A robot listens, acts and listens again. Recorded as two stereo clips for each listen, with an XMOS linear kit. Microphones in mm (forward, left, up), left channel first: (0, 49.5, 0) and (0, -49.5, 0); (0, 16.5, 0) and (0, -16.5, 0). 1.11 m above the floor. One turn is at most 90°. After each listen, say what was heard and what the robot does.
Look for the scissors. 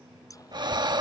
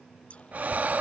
The scissors: about 35° left or 145° left. Turn 35° left.
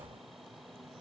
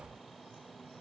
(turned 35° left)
Keep listening.
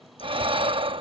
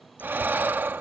Keep listening.
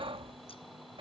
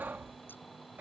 I heard scissors, but can't make it out now. It was about straight ahead or 110° left.